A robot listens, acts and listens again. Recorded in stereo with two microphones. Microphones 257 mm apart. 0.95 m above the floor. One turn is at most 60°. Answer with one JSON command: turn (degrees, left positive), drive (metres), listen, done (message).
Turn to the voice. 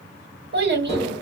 {"turn": -45}
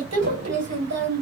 {"turn": -60}
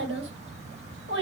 {"turn": -50}
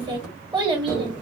{"turn": -20}
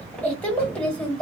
{"done": "Found it: a child speaking, straight ahead, 1 to 2 m away."}